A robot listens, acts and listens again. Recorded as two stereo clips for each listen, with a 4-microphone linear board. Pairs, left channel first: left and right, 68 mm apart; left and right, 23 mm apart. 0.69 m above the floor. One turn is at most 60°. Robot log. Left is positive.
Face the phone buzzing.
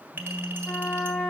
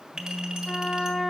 note: The phone buzzing: about 30° left or 150° left.
cmd yaw +30
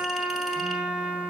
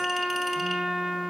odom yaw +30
cmd idle
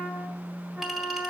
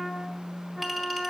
note: So it is at 120° left.
cmd yaw +60
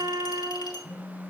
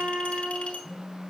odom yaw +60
note: The phone buzzing is now 35° left.
cmd yaw +35
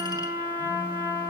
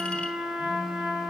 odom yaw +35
cmd idle
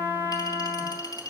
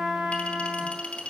cmd idle
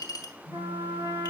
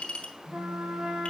end: Found it: a phone buzzing, straight ahead.